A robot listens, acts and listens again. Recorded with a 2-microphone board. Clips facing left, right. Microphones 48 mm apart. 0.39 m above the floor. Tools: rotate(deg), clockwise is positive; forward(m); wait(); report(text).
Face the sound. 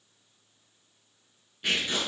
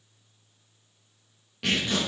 rotate(90)
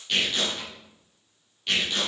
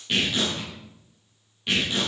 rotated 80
rotate(15)
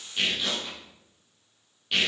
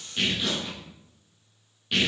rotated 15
report("Found it: tearing paper, straight ahead.")